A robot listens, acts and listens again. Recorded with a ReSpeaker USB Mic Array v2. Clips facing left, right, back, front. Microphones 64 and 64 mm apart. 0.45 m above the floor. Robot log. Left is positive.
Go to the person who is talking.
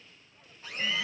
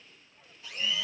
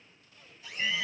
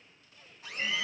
cmd idle
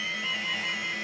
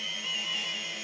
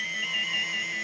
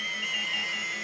cmd idle
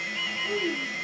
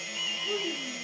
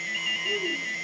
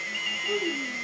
note: The child speaking: 10° left.
cmd yaw +10
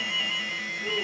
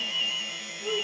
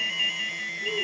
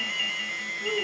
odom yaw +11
cmd fwd 1.0
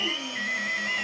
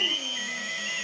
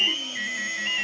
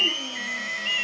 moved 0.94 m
cmd idle
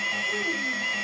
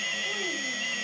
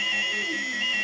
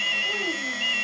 cmd idle
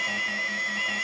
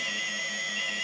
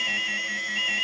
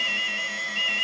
end: Facing where the child speaking came from. I can't hear it now. I did not reach it.